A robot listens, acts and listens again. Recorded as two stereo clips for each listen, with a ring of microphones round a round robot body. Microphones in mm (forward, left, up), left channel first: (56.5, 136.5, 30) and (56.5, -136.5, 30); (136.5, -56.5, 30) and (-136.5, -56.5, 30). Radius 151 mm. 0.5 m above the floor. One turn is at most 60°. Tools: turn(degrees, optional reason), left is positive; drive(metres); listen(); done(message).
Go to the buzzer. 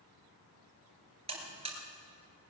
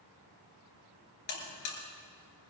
turn(degrees=-20, reason="The buzzer: 20° right.")
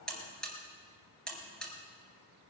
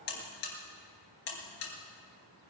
drive(metres=1.0)
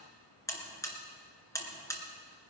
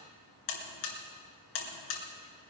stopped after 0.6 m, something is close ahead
turn(degrees=10, reason="The buzzer is now 10° left.")
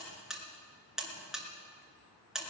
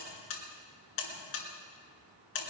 done("Blocked. The buzzer is further on, straight ahead.")